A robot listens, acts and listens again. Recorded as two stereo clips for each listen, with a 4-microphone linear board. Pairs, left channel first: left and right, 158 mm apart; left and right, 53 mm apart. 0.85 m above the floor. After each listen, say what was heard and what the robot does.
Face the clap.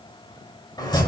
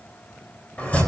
Keep listening.
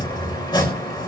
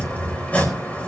Keep listening.
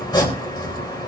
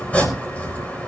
I can't make out a clap, only chopping.